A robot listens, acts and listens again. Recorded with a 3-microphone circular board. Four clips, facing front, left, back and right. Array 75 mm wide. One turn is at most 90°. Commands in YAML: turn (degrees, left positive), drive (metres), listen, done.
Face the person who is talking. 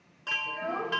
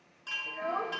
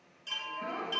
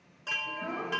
turn: 65
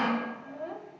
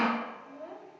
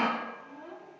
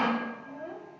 done: "Found it: a child speaking, straight ahead, 1 to 2 m away."